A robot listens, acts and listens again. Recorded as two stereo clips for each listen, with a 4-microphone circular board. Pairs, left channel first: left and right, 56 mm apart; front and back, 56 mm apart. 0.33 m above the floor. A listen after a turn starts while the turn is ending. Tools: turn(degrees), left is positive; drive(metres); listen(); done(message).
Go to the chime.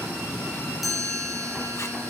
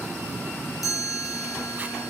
drive(metres=1.0)
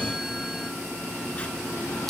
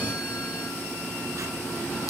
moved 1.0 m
listen()
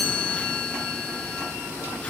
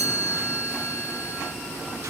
drive(metres=1.0)
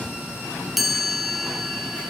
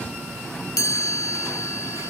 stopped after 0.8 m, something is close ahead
done("Arrived at the chime, straight ahead.")